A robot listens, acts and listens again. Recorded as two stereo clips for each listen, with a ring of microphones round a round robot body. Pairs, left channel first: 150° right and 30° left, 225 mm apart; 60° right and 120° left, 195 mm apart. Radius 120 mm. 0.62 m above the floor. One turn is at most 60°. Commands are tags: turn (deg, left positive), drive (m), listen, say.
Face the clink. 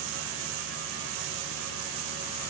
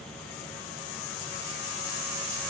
<listen/>
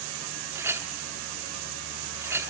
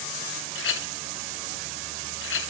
<turn deg="-50"/>
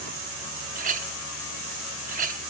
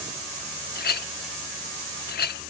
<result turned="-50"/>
<turn deg="-25"/>
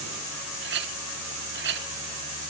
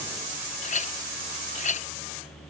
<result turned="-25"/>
<turn deg="-10"/>
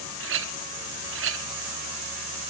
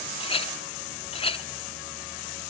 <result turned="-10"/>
<say>Facing the clink.</say>